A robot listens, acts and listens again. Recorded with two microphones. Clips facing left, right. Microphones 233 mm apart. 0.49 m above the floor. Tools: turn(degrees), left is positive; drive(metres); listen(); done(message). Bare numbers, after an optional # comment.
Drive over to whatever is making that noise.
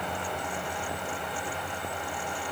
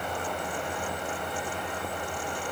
listen()
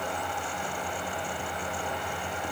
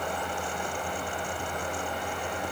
listen()
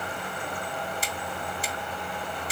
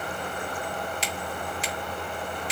# The finger snap: about 75° right or 105° right.
turn(-75)
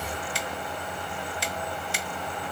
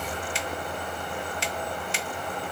# So it is at 20° right.
turn(-20)
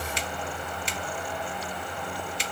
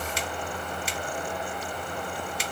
drive(1.0)
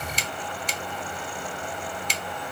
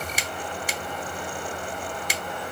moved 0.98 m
# The finger snap is now 10° right.
turn(-10)
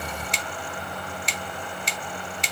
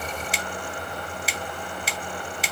drive(1.0)
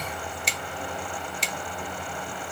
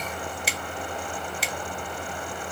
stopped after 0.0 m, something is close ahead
done("Arrived at the finger snap, straight ahead.")